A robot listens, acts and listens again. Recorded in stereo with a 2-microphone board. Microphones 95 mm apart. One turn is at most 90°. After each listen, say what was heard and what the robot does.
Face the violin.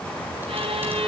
Turn 90° right.
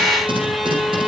Found it: a violin, straight ahead, 2 to 4 m away.